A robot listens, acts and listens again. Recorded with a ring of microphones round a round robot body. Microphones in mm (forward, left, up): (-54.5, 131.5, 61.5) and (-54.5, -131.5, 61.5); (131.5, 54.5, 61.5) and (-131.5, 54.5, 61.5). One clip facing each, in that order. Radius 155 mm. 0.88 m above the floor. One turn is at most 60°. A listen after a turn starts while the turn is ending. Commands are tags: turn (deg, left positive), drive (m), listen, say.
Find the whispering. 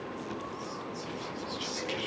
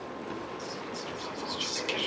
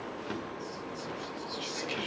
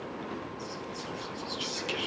<turn deg="-60"/>
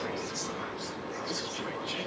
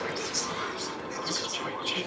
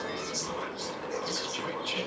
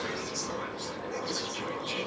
<turn deg="-55"/>
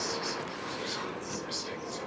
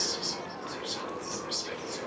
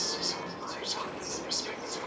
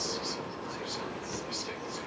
<say>Facing the whispering, over 4 m away.</say>